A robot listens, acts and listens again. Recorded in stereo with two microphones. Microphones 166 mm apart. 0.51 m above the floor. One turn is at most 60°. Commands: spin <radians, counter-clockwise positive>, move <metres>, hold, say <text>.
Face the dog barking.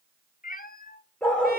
spin 0.52
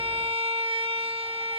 hold
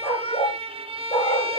spin 1.05
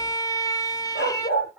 spin 1.05
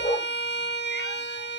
spin 0.52
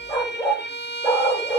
spin 0.26
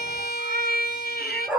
say Facing the dog barking, over 4 m away.